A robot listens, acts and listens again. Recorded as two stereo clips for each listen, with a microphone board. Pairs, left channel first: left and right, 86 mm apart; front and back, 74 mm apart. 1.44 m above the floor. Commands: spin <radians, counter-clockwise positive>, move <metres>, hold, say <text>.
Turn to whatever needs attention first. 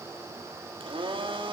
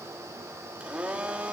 hold
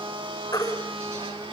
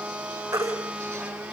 spin 2.36
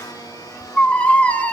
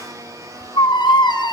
spin 0.26
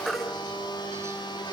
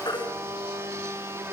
say Facing the baby crying.